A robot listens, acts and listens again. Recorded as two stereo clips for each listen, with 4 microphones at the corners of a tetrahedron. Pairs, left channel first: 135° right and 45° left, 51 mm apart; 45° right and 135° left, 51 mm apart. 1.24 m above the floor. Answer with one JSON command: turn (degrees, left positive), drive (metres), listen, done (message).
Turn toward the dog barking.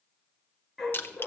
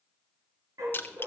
{"turn": 130}
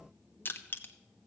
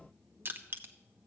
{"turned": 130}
{"listen": true}
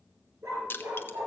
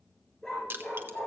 {"turn": 30}
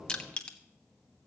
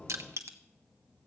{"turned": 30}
{"done": "Facing the dog barking, over 4 m away."}